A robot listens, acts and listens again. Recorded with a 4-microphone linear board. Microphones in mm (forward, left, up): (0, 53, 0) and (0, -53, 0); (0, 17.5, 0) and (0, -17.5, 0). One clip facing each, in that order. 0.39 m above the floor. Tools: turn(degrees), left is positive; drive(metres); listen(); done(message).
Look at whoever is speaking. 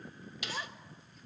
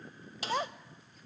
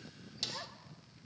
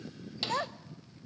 turn(degrees=-55)
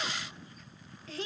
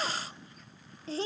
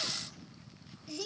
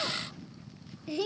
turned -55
turn(degrees=-40)
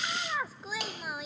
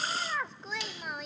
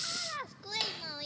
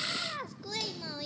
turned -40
done("Found it: a child speaking, straight ahead.")